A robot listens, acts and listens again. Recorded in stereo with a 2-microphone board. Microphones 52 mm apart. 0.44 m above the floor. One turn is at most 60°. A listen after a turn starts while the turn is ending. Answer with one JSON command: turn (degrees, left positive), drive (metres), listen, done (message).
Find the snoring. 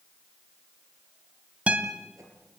{"listen": true}
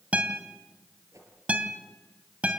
{"listen": true}
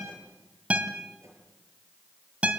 {"done": "I can't make out snoring, only a guitar and a whoosh."}